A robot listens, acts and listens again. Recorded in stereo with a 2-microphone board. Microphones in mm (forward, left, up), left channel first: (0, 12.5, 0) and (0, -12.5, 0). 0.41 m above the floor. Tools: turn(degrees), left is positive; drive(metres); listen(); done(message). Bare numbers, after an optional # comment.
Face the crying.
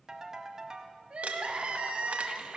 # The crying: about 55° right or 125° right.
turn(-55)
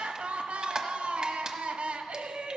# So it is at 65° right.
turn(-65)
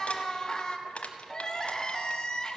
# The crying is now 35° left.
turn(35)
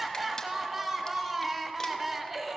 # The crying is now 10° right.
turn(-10)
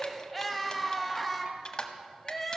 done("Facing the crying, under 1 m away.")